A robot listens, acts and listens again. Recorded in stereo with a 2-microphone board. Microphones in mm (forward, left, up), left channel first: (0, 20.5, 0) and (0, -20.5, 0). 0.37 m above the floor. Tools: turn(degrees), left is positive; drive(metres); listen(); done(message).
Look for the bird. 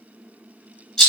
listen()
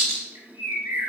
turn(degrees=-90)
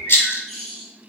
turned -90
done("Found it: a bird, straight ahead.")